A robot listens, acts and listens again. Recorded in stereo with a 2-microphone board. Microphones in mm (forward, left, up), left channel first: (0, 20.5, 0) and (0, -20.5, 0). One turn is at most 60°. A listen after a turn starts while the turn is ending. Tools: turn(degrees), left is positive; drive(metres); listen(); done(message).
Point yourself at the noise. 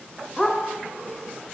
turn(degrees=15)
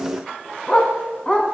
turn(degrees=20)
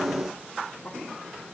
listen()
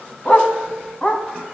turn(degrees=25)
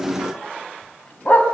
turn(degrees=60)
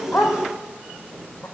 turn(degrees=60)
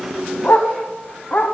turn(degrees=55)
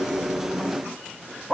turn(degrees=-10)
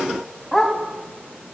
done("Found it: a dog barking, straight ahead.")